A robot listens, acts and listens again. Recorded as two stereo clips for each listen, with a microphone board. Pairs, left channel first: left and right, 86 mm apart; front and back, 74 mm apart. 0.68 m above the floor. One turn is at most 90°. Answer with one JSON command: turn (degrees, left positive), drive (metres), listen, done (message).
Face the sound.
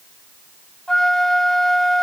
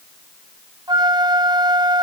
{"turn": 90}
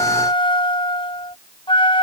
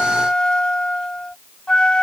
{"turn": 80}
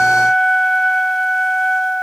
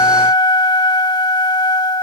{"done": "Found it: a flute, straight ahead."}